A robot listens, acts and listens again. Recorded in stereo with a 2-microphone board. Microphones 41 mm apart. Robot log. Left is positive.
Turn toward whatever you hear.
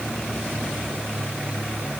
cmd idle
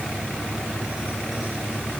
cmd idle
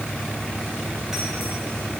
end: I can't make out anything.